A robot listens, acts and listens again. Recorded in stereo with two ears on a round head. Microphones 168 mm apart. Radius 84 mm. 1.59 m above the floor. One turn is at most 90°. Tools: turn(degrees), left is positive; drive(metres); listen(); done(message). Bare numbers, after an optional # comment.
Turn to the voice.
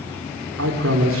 turn(-90)
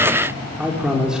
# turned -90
done("Facing the man speaking, over 4 m away.")